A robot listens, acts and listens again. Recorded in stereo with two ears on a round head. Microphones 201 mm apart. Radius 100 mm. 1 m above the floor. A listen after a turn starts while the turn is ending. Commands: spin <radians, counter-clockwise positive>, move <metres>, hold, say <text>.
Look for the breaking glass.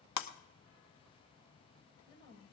spin 1.57
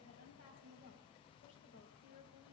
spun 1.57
say Facing where the breaking glass came from. I can't hear it now.